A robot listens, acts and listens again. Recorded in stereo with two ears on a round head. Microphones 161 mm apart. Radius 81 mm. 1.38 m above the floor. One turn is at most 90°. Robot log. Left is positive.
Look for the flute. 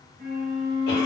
note: The flute: about 55° right or 125° right.
cmd yaw -55
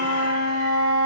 note: So it is at 70° right.
cmd yaw -70
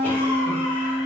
note: The flute is now 20° right.
cmd yaw -20
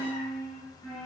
end: Facing the flute.